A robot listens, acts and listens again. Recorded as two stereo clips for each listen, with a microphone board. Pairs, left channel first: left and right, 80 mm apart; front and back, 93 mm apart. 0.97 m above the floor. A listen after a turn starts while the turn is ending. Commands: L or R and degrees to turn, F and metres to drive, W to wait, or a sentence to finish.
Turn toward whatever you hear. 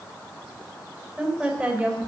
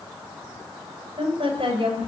R170
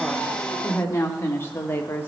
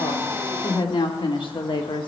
L25
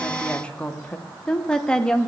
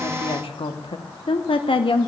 L10
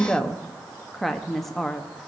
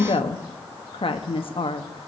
Found it: a woman speaking, straight ahead, 1 to 2 m away.